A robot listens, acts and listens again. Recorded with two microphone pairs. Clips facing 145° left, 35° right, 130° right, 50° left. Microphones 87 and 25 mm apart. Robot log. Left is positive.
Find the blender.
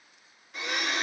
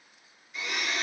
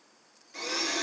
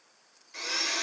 note: The blender: 125° left.
cmd yaw +125
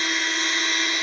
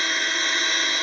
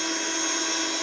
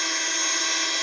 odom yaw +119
end: Facing the blender.